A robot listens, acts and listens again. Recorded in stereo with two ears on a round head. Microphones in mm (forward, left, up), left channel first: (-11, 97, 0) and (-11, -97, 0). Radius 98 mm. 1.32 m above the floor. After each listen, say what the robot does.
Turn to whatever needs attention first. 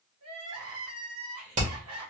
Turn 75° right.
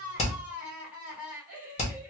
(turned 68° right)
Facing the crying.